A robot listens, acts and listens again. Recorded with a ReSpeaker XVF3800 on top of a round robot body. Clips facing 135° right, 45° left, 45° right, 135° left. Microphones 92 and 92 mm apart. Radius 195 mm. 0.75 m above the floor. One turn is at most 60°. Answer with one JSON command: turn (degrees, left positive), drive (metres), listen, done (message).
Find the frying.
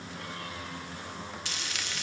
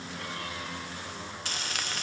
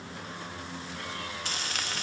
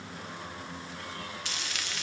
{"done": "Found it: frying, straight ahead."}